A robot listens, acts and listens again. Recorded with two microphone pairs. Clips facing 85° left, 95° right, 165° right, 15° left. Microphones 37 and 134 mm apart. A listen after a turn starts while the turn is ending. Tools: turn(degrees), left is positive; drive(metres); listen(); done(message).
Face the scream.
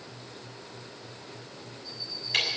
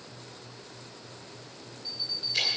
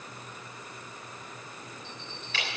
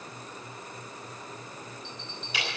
listen()
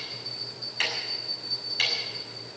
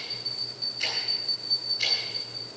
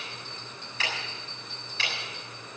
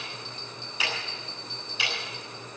listen()
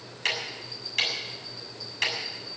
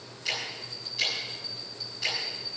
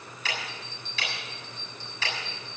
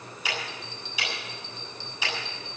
done("I can't make out a scream, only a bell and ticking.")